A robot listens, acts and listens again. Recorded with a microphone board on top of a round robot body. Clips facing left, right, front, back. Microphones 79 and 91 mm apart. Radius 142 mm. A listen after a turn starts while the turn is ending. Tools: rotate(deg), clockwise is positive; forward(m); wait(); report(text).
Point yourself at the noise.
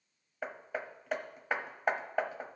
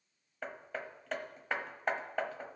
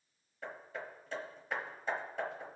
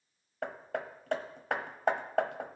rotate(-170)
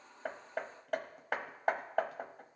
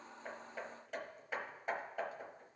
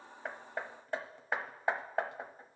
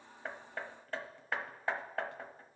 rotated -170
rotate(-70)
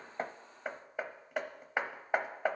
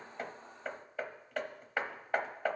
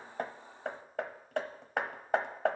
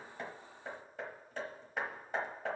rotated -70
rotate(-15)
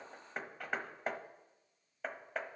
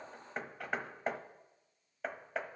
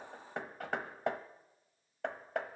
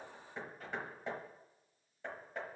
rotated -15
report("Facing the hammering, 1 to 2 m away.")